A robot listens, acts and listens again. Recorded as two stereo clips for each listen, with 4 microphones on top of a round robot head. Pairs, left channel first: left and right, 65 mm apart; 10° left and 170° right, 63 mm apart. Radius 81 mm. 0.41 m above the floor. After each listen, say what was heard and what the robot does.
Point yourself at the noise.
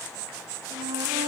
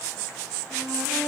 Keep listening.
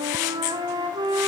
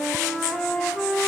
The flute: 75° right. Turn 75° right.
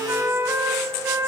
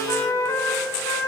The flute is now 35° right. Turn 35° right.
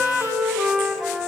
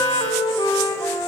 Found it: a flute, straight ahead, 2 to 4 m away.